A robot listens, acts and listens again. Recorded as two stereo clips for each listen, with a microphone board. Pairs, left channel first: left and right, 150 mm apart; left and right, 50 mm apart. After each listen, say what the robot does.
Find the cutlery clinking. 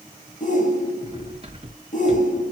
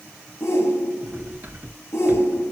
Turn 40° right.
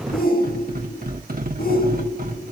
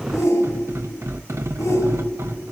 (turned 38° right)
Turn 100° right.
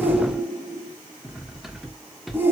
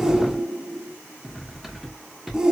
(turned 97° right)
Found it: cutlery clinking, straight ahead, 1 to 2 m away.